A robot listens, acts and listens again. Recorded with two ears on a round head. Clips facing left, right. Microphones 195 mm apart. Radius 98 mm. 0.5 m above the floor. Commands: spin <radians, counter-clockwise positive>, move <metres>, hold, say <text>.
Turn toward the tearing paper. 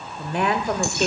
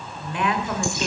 hold
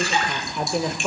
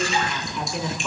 hold
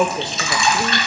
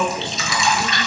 say I can't make out tearing paper, only dripping and a woman speaking.